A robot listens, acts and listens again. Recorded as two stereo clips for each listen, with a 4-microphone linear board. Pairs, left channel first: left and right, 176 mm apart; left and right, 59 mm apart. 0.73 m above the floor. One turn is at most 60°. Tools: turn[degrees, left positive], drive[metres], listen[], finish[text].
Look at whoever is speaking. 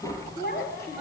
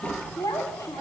Thought: The child speaking: about 70° left or 110° left.
Action: turn[60]
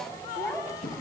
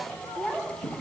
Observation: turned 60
Action: finish[Found it: a child speaking, straight ahead, 2 to 4 m away.]